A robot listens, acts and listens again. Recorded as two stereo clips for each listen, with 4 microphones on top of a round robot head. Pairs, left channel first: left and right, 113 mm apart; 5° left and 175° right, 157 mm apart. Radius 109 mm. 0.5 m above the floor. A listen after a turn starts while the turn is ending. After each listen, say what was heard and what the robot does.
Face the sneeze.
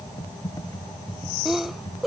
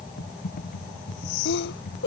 Facing the sneeze.